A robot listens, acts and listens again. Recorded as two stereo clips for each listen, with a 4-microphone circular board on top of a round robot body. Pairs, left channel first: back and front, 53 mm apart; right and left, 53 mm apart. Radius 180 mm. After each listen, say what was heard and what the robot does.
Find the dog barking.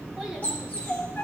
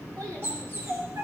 The dog barking: 120° left. Turn 120° left.
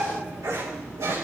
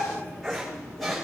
Found it: a dog barking, straight ahead.